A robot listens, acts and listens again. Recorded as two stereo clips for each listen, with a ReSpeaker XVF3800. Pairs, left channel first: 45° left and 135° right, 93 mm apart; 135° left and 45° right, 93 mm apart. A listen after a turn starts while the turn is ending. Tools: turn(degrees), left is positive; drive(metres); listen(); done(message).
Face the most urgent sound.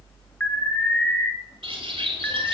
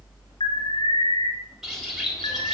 turn(degrees=120)
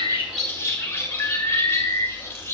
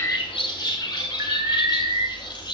done("Found it: an alarm, straight ahead, 2 to 4 m away.")